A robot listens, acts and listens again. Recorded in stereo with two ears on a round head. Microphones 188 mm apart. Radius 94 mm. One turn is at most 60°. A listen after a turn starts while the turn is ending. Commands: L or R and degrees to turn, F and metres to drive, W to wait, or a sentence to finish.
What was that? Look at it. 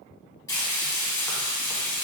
L15
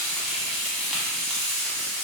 Found it: frying, straight ahead, under 1 m away.